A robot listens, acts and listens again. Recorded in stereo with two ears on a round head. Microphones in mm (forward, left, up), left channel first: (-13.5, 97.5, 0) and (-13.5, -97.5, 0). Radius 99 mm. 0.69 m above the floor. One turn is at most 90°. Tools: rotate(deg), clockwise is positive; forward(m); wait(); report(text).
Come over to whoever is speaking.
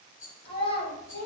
rotate(-30)
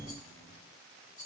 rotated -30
wait()
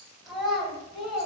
forward(1.0)
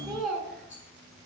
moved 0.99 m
forward(1.0)
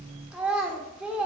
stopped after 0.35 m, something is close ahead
report("Arrived at the child speaking, straight ahead.")